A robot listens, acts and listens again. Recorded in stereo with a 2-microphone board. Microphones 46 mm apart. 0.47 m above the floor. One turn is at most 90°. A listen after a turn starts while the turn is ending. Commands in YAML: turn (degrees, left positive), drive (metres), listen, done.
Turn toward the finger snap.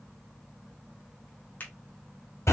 turn: 40
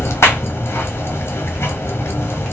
listen: true
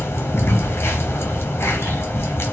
listen: true
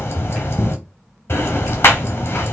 done: "I heard a finger snap, but can't make it out now. It was about straight ahead or 100° left."